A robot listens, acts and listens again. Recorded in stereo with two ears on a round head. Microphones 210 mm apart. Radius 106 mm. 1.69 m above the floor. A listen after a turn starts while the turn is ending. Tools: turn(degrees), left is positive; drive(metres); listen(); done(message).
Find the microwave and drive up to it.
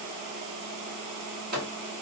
turn(degrees=-45)
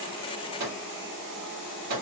turn(degrees=-85)
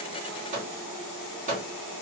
turn(degrees=-35)
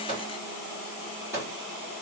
turn(degrees=-10)
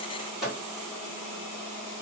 drive(metres=1.0)
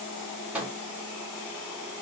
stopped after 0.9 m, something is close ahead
done("Arrived at the microwave, straight ahead.")